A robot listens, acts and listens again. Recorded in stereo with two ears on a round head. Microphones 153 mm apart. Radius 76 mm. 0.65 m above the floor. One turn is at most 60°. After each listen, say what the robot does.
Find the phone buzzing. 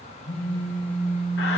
Turn 35° left.
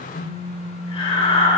Turn 60° left.
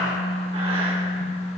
Turn 35° left.
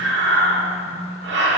Keep listening.
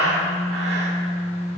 Turn 20° right.
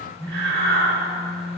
Found it: a phone buzzing, straight ahead.